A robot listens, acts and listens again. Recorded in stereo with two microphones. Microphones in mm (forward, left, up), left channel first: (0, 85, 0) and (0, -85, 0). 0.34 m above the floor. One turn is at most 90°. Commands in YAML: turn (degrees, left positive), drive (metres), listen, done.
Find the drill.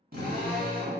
turn: -60
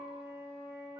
listen: true
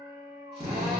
turn: -40
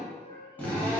turn: 10
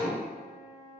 done: "Found it: a drill, straight ahead."